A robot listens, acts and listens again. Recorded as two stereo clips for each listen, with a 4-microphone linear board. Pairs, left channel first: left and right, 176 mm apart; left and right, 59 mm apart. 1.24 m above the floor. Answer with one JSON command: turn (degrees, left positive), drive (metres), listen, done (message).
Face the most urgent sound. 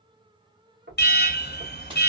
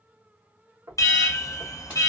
{"turn": 70}
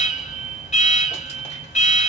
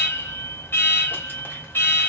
{"turn": 40}
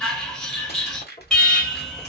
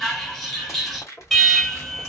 {"done": "Facing the alarm."}